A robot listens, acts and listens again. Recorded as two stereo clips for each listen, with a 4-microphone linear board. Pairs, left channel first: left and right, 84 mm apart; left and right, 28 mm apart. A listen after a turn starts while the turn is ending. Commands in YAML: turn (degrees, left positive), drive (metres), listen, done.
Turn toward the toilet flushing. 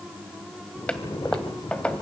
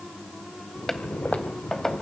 turn: 30
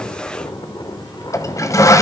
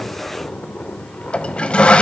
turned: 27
turn: 140
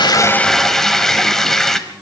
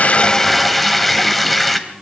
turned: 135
done: "Found it: a toilet flushing, straight ahead, 1 to 2 m away."